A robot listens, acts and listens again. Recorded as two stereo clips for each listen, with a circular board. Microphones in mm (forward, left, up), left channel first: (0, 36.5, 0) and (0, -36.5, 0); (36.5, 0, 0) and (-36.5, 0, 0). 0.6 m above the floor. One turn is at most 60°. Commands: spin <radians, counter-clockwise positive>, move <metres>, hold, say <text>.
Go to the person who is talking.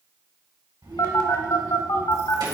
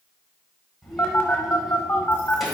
spin -1.05
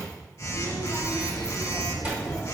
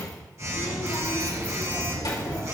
spin -0.35
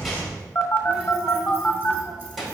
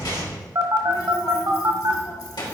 move 1.0
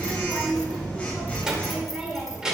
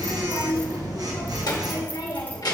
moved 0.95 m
spin -0.17
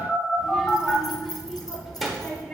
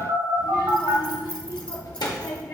move 1.0
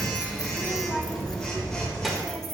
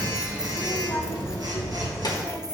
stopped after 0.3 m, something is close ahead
say Arrived at the child speaking, straight ahead.